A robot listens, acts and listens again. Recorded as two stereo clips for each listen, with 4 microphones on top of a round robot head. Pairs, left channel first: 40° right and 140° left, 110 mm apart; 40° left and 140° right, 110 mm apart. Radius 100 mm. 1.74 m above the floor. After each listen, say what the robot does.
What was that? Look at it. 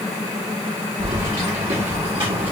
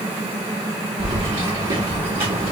Turn 175° right.
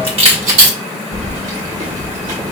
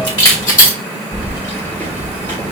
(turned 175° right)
Turn 110° left.
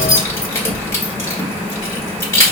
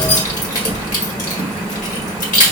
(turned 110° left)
Turn 25° left.
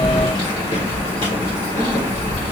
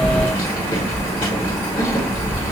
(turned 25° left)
Facing the keys jangling, 1 to 2 m away.